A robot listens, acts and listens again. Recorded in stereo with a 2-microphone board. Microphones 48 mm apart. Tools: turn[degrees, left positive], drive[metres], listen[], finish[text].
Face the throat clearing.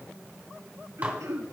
Action: turn[-90]
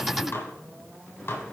Action: listen[]
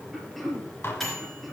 Action: finish[Found it: throat clearing, straight ahead.]